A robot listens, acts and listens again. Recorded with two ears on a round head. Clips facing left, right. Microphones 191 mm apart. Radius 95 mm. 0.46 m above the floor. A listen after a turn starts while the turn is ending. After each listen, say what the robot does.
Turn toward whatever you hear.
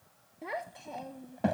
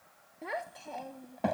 Turn 30° left.
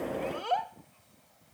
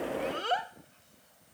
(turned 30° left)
Turn 15° right.
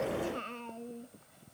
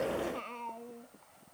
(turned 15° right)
Turn 20° left.
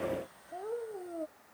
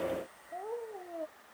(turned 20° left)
Turn 20° left.
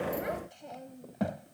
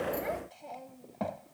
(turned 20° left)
Turn 15° left.
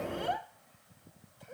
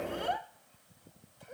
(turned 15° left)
Found it: a child speaking, straight ahead.